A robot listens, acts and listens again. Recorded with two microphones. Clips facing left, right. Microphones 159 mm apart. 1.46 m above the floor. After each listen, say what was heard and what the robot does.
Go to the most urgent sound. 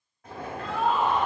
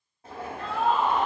The scream: about 65° right or 115° right. Turn 65° right.
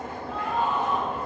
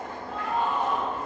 Drive 1.0 m forward.
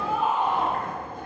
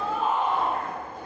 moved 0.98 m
The scream is now 10° left. Turn 10° left.
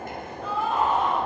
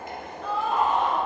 Drive 1.0 m forward.
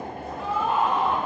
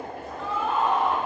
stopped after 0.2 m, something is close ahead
The scream is now 10° left. Turn 10° left.
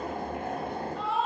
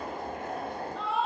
I am next to the scream.